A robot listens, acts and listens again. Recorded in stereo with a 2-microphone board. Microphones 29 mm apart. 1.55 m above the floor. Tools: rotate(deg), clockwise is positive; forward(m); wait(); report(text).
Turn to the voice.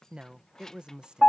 rotate(30)
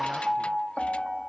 wait()
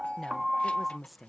report("Found it: a woman speaking, straight ahead.")